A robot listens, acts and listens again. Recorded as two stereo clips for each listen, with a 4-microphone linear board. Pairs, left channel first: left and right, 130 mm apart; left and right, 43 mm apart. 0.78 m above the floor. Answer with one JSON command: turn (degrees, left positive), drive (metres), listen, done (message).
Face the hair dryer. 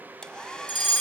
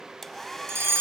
{"turn": 30}
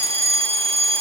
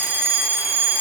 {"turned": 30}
{"listen": true}
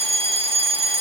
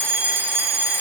{"listen": true}
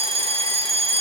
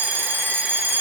{"done": "I heard a hair dryer, but can't make it out now. It was about 25° right or 145° left."}